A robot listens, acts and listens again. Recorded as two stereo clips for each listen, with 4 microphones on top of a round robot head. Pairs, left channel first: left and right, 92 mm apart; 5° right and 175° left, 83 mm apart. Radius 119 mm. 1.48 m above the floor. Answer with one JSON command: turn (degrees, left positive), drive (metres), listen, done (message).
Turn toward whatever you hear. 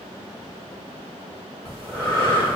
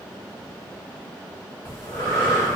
{"turn": 20}
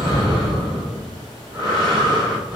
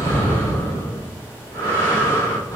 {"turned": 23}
{"done": "Facing the breathing."}